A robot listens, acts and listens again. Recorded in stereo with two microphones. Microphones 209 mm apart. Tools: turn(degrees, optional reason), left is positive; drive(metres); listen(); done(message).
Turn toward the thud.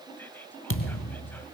turn(degrees=90)
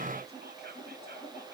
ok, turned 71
turn(degrees=20, reason="Nothing new. It was at 20° left.")
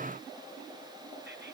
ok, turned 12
done("Facing where the thud came from. I can't hear it now.")